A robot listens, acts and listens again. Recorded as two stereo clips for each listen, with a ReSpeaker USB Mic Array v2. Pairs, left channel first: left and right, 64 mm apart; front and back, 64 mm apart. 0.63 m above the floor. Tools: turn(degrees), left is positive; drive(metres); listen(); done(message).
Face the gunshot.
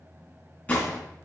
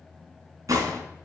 turn(degrees=155)
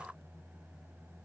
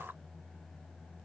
done("I heard a gunshot from this way, but can't make it out now.")